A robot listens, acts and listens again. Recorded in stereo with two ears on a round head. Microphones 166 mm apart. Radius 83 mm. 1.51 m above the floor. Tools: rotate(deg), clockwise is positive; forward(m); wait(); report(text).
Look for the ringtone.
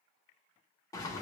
wait()
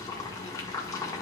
wait()
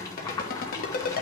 rotate(-50)
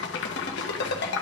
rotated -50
rotate(-70)
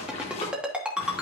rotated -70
report("Facing the ringtone, 1 to 2 m away.")